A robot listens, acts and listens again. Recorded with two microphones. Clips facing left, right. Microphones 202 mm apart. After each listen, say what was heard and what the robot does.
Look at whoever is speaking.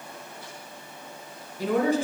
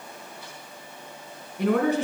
The woman speaking: about 65° right or 115° right. Turn 65° right.
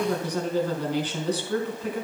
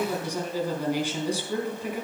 So it is at 10° right. Turn 10° right.
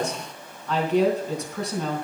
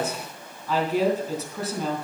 Facing the woman speaking, 2 to 4 m away.